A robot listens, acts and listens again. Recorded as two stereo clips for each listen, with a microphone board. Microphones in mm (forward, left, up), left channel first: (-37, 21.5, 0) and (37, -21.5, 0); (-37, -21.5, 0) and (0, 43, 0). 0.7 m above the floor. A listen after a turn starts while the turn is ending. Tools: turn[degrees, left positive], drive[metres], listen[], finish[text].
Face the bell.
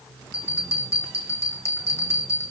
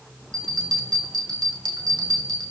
Thought: The bell: 95° left.
Action: turn[95]
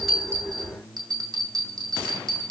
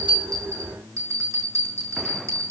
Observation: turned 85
Thought: The bell is now 10° left.
Action: turn[10]
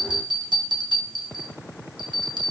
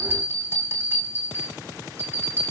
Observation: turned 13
Action: finish[Found it: a bell, straight ahead, over 4 m away.]